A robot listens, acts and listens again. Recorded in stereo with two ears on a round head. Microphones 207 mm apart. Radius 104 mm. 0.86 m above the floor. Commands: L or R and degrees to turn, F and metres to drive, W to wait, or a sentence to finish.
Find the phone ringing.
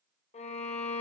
W
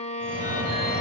R25
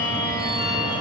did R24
R135
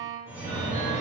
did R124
R10
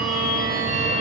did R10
Facing the phone ringing, 2 to 4 m away.